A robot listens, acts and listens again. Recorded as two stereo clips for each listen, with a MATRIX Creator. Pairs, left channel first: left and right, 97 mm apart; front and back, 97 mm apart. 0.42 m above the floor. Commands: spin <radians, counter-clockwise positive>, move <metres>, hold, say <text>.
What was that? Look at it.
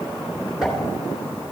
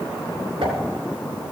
spin -3.05
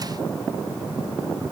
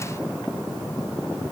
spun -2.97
say Facing where the pop came from. I can't hear it now.